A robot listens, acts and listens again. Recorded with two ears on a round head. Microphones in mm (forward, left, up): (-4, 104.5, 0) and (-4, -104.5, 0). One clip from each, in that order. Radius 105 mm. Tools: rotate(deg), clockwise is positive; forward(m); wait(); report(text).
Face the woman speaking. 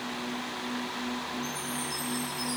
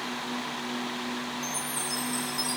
wait()
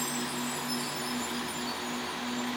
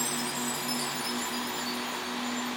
wait()
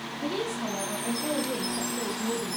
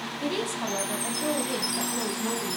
rotate(55)
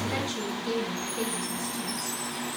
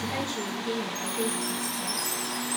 report("Found it: a woman speaking, straight ahead, over 4 m away.")